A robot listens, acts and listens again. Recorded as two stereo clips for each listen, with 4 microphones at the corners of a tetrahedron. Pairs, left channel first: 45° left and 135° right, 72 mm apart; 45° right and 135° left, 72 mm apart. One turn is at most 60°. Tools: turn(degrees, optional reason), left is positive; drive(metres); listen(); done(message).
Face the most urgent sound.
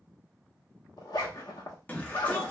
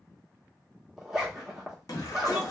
turn(degrees=-25, reason="The shout: 25° right.")
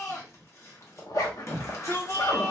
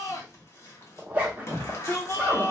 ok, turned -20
done("Found it: a shout, straight ahead, 1 to 2 m away.")